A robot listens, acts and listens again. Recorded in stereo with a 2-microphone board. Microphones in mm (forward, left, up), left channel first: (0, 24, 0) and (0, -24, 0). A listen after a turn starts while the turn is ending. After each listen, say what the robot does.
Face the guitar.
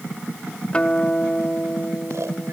Turn 25° left.
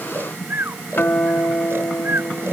Turn 130° left.
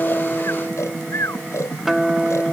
Turn 10° right.
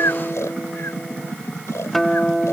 Facing the guitar.